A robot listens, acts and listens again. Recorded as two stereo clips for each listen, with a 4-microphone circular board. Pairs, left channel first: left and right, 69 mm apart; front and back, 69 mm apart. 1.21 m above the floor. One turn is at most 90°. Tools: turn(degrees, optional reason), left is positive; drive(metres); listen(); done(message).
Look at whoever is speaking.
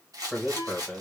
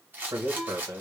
turn(degrees=-90, reason="The man speaking: 175° right.")
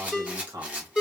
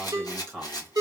turn(degrees=-75, reason="The man speaking is now 75° right.")
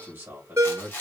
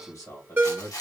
turn(degrees=-25, reason="The man speaking is now 25° right.")
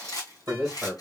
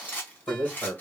done("Facing the man speaking, 1 to 2 m away.")